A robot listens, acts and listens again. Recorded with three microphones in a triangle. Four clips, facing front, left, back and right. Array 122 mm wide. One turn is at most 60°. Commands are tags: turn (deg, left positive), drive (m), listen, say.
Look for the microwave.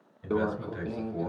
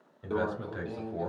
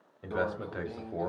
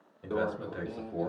<say>Facing the microwave, 1 to 2 m away.</say>